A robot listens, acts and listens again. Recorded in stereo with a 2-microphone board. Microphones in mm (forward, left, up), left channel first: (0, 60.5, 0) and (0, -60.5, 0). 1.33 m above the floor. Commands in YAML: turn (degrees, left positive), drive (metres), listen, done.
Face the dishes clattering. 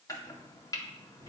listen: true
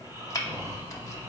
listen: true
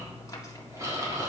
done: "I can't make out dishes clattering to turn to."